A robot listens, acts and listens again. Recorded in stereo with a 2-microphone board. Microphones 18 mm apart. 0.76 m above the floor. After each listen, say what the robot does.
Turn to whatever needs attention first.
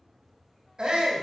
Turn 55° right.
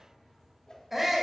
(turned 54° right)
Turn 15° right.
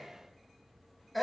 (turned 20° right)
Facing the shout.